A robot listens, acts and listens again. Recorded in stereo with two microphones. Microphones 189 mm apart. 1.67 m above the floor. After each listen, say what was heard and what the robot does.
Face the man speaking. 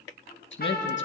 Turn 90° left.
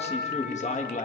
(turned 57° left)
So it is at 40° left. Turn 40° left.
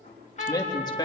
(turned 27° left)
The man speaking is now 25° left. Turn 25° left.
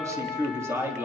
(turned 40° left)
The man speaking is now 10° right. Turn 10° right.
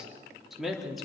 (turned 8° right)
Facing the man speaking.